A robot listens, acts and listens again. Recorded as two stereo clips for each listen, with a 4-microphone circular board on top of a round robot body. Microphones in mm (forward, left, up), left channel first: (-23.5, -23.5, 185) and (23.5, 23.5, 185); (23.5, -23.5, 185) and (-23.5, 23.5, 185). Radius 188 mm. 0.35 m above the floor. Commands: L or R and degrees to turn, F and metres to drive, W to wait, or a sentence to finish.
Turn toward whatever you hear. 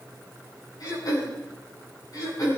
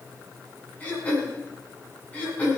R115
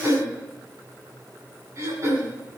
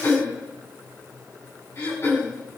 Facing the throat clearing, over 4 m away.